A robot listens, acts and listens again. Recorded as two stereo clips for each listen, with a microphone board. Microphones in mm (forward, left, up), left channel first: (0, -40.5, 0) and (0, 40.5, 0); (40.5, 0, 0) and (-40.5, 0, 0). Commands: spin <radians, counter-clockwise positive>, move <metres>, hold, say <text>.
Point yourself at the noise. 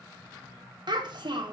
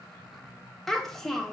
spin 1.48
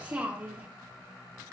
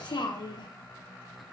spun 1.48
spin 0.35
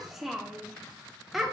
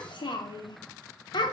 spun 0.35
say Found it: a child speaking, straight ahead.